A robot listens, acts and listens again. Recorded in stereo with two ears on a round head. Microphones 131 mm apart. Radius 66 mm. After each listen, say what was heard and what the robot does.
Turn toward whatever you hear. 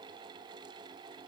Keep listening.
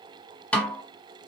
Turn 30° left.
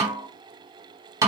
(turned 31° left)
So it is at 20° right. Turn 20° right.
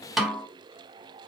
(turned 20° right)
Facing the snare drum, 1 to 2 m away.